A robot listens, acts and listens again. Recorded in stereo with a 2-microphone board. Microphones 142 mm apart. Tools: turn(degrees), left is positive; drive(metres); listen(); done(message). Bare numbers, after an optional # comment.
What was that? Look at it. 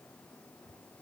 listen()
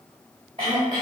# The throat clearing: about 45° right or 135° right.
turn(-45)
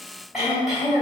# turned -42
done("Facing the throat clearing.")